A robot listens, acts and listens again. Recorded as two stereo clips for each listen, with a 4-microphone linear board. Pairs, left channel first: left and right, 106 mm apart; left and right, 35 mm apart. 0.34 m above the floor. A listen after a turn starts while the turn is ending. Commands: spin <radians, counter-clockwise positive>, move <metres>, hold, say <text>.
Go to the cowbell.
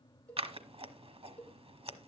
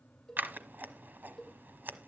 spin 0.52
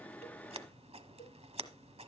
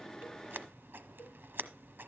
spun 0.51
hold
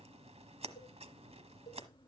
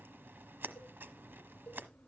hold
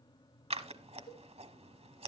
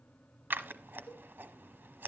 say I heard a cowbell, but can't make it out now. It was about 15° right or 140° left. I did not reach it.